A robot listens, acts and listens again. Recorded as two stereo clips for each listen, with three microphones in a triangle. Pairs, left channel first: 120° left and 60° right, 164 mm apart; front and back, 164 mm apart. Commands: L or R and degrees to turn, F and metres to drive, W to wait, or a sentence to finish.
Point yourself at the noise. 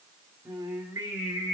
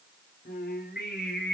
L15
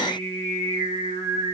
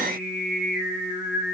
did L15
Facing the singing, over 4 m away.